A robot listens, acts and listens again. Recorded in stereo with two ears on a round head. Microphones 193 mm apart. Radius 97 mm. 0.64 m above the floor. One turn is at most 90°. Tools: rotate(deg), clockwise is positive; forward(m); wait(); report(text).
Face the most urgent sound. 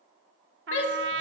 rotate(-60)
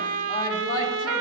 rotate(-25)
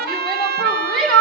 report("Found it: a shout, straight ahead.")